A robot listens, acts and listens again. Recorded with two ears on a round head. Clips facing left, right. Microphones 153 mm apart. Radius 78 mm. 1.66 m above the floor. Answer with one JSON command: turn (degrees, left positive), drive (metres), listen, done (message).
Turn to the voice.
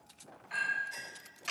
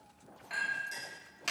{"listen": true}
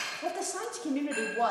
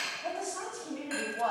{"turn": 65}
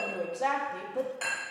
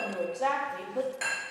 {"done": "Facing the woman speaking."}